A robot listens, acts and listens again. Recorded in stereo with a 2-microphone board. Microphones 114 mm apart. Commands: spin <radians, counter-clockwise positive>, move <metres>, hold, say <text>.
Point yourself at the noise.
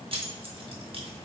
spin -0.87
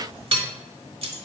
spin -1.13
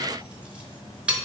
spin -0.17
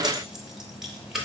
say Found it: keys jangling, straight ahead, under 1 m away.